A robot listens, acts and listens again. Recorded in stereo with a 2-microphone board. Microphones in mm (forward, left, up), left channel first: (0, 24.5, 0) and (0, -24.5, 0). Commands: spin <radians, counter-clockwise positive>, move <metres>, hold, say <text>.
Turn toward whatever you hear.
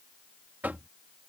spin -0.70
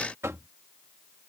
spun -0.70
spin -1.75
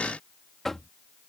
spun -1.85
say Found it: knocking, straight ahead.